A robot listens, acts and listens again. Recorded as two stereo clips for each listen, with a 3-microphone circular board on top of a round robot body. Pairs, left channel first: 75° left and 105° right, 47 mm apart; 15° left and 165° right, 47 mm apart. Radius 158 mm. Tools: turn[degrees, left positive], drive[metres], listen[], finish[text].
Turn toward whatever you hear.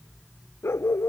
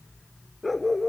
Thought: The dog barking: 105° left.
Action: turn[105]
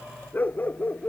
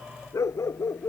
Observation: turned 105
Thought: The dog barking is now 25° left.
Action: turn[25]
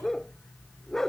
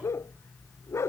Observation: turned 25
Thought: The dog barking is now 10° right.
Action: turn[-10]
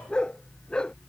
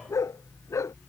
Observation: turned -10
Action: finish[Facing the dog barking.]